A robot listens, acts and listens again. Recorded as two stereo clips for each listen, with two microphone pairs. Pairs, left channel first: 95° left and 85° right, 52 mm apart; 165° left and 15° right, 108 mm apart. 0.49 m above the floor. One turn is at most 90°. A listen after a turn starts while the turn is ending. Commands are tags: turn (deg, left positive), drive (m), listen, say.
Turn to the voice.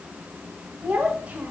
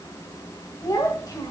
<turn deg="-90"/>
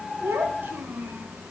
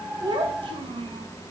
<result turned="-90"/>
<turn deg="-45"/>
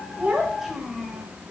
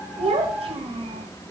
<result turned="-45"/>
<say>Facing the child speaking.</say>